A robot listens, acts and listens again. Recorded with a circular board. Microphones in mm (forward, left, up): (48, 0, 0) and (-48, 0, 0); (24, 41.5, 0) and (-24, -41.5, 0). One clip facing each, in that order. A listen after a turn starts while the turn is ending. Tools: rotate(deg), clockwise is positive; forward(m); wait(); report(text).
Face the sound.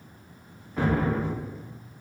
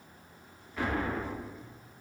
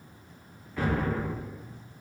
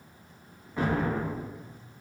rotate(55)
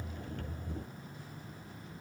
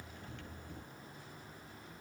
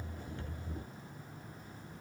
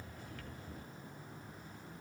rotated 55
report("I heard an explosion from this way, but can't make it out now.")